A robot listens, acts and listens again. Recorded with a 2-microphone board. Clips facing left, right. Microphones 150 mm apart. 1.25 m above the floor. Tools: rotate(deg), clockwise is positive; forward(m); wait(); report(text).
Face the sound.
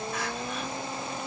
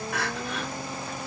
rotate(90)
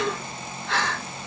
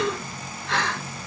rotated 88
report("Found it: crying, straight ahead.")